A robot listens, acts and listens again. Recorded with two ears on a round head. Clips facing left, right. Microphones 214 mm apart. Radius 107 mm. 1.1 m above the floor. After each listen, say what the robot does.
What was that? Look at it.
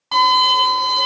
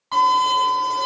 Turn 60° left.
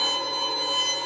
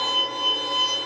Facing the violin.